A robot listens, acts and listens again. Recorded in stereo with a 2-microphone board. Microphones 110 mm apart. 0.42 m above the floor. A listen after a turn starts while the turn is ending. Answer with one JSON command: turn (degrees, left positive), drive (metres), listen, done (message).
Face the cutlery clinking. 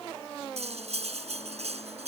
{"turn": -90}
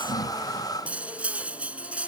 {"turn": -10}
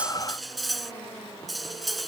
{"done": "Found it: cutlery clinking, straight ahead."}